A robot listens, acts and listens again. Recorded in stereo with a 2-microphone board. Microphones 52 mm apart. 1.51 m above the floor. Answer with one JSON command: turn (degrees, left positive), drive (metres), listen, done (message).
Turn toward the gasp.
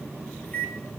{"listen": true}
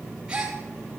{"turn": -15}
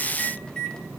{"listen": true}
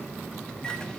{"done": "I heard a gasp, but can't make it out now. It was about straight ahead or 150° right."}